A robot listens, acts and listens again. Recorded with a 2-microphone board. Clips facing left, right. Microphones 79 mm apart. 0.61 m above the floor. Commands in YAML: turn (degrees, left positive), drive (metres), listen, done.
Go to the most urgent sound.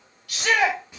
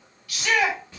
turn: 60
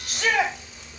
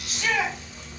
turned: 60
turn: 55
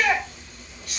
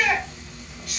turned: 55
drive: 1.0
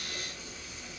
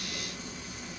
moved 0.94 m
listen: true
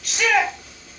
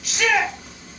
drive: 1.0
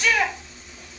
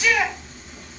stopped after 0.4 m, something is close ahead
done: "Arrived at the shout, straight ahead."